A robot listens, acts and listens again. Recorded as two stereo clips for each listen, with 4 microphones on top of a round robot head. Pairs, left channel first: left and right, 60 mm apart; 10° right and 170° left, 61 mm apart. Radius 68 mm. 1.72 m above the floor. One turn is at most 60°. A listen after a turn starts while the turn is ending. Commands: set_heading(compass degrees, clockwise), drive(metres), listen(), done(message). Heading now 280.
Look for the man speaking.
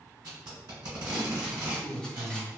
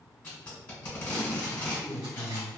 done("Found it: a man speaking, straight ahead, under 1 m away.")